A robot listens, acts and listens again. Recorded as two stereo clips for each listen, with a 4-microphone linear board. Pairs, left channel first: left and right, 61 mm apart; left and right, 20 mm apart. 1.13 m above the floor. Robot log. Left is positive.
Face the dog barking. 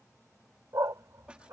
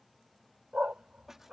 note: The dog barking: about 60° right or 120° right.
cmd yaw -60
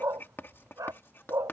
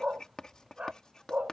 note: So it is at 70° right.
cmd yaw -70
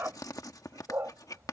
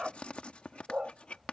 note: The dog barking is now 45° right.
cmd yaw -45
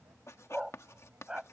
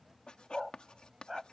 note: The dog barking is now 15° right.
cmd yaw -15
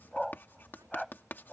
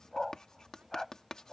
end: Found it: a dog barking, straight ahead.